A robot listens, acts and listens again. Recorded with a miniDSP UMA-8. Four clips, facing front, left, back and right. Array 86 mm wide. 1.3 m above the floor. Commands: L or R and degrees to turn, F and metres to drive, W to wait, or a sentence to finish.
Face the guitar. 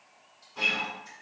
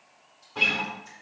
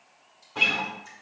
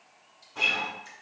L165
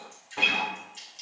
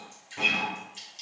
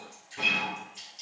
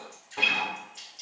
R25
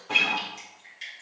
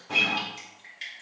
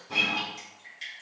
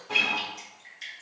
Facing the guitar.